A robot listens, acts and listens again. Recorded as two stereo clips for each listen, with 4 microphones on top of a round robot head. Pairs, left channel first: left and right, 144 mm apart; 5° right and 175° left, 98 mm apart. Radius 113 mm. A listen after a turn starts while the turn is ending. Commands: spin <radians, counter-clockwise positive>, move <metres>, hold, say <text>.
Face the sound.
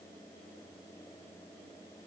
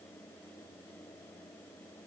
hold
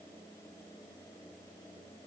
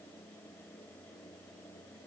hold
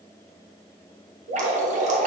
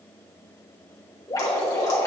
spin -1.05
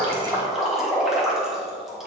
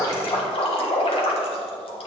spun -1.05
say Found it: dripping, straight ahead.